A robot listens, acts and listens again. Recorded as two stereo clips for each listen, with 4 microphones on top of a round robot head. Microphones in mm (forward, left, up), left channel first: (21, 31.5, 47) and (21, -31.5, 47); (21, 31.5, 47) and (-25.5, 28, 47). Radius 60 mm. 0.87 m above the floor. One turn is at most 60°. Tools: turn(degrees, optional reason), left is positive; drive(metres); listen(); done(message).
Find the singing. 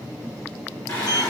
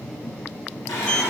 turn(degrees=35, reason="The singing: 35° left.")
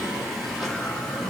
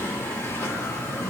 done("Facing the singing, 2 to 4 m away.")